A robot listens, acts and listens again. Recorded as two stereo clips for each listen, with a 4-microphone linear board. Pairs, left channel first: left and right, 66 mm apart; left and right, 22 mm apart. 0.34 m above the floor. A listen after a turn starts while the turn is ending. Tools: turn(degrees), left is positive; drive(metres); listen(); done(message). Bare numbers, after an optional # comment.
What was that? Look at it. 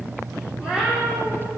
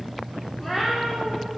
turn(-30)
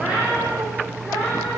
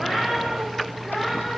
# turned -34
done("Facing the cat meowing, over 4 m away.")